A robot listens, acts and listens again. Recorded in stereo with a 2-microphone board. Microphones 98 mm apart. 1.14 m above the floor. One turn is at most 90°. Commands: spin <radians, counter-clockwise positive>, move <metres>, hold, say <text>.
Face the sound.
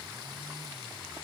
hold
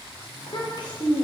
spin 0.87
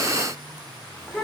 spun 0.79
say Found it: a child speaking, straight ahead, 2 to 4 m away.